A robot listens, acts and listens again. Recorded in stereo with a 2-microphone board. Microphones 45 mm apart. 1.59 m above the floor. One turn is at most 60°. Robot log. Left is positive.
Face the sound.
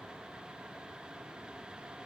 cmd idle
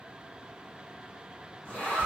note: The zipper: about 35° left or 145° left.
cmd yaw +35
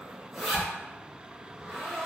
end: Facing the zipper, 1 to 2 m away.